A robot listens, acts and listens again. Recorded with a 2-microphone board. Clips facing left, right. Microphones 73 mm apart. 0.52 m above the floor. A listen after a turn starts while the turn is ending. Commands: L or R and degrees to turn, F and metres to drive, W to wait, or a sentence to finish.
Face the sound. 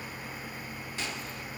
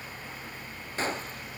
R35
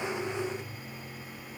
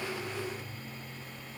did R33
W
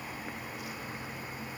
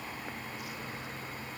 I heard a gunshot, but can't make it out now. It was about 5° right or 110° right.